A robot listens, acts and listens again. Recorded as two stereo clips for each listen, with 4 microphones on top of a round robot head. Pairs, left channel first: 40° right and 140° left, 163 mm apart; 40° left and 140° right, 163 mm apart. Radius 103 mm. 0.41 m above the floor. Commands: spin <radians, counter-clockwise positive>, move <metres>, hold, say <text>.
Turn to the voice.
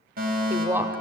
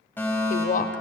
spin 1.13
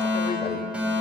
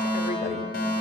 hold
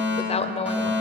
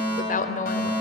spin 0.17
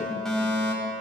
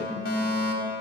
hold
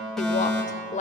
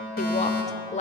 say Facing the woman speaking, 1 to 2 m away.